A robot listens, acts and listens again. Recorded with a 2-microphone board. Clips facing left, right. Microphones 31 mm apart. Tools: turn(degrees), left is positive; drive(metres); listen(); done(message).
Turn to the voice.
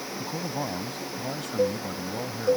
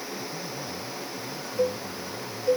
turn(degrees=90)
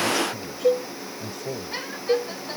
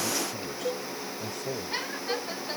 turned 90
done("Facing the man speaking.")